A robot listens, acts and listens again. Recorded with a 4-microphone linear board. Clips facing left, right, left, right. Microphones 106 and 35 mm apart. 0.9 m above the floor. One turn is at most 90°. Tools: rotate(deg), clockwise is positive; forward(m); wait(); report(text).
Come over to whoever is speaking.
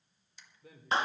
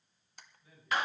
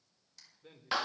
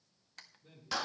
rotate(-90)
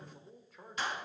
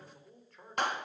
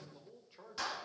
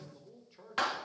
forward(1.0)
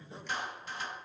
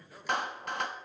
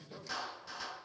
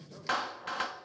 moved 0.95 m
wait()
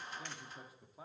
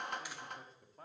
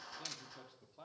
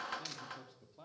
rotate(-10)
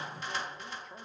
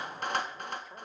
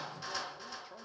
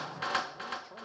forward(1.0)
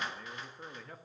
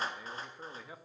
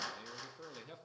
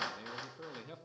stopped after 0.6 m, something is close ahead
report("I am next to the man speaking.")